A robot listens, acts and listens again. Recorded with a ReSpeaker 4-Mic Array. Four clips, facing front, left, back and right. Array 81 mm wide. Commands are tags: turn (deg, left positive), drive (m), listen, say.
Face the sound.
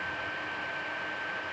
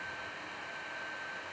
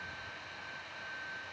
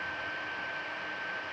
<listen/>
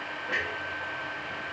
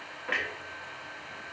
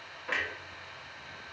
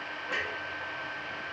<turn deg="100"/>
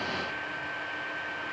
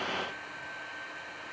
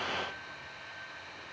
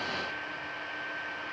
<say>Facing where the clunk came from. I can't hear it now.</say>